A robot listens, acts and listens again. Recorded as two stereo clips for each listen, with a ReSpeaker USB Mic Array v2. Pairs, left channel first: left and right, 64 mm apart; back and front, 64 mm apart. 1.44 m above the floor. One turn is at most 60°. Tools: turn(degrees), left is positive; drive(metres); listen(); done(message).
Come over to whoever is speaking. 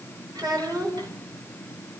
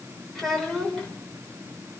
turn(degrees=-60)
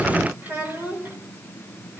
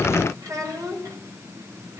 turn(degrees=-30)
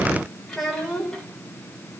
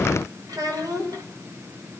drive(metres=1.0)
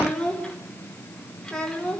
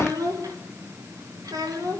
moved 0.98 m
turn(degrees=10)
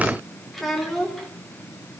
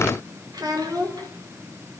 drive(metres=1.0)
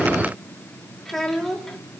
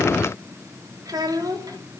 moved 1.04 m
drive(metres=1.0)
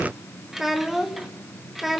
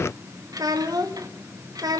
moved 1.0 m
drive(metres=1.0)
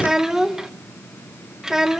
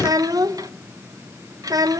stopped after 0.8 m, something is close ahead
done("I am next to the child speaking.")